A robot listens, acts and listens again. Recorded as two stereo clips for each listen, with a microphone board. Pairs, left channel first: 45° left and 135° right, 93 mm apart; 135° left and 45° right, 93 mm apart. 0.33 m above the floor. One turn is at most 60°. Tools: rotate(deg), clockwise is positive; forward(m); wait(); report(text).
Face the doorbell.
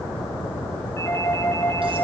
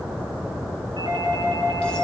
rotate(15)
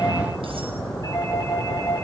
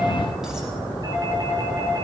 report("Facing the doorbell, over 4 m away.")